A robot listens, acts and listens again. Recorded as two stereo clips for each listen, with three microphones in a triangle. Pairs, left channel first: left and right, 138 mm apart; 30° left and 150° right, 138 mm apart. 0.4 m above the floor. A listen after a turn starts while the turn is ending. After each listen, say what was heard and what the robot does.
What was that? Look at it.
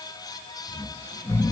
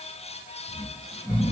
The snoring: 165° left. Turn 165° left.
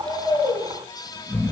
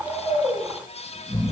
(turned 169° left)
Found it: snoring, straight ahead.